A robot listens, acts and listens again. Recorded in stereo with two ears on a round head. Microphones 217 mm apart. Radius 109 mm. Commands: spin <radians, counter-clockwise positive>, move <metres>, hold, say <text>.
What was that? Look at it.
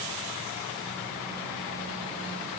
hold
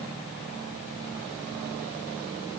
hold
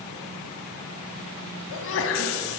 spin 1.05
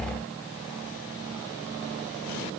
hold
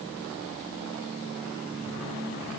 say I heard a sneeze, but can't make it out now. It was about straight ahead or 60° left.